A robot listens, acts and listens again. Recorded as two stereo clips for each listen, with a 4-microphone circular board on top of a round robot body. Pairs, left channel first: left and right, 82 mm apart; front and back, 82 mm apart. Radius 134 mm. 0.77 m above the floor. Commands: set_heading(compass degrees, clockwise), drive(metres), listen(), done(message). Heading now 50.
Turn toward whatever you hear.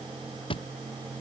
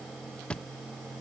set_heading(330)
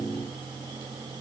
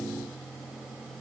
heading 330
done("Facing where the thud came from. I can't hear it now.")